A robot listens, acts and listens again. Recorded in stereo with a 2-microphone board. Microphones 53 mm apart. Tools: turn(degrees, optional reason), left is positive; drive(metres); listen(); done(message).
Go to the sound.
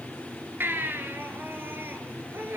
turn(degrees=-45, reason="The baby crying: about 45° right or 135° right.")
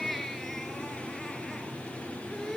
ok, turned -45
listen()
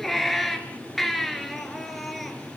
drive(metres=1.0)
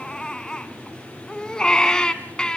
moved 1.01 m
turn(degrees=15, reason="The baby crying is now 15° left.")
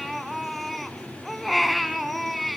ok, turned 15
drive(metres=1.0)
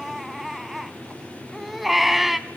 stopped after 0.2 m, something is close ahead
done("I am next to the baby crying.")